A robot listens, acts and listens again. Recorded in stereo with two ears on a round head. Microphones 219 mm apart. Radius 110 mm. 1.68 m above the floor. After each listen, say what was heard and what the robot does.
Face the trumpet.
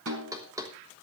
Keep listening.
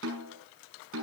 Keep listening.
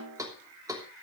I can't make out a trumpet, only a snare drum and knocking.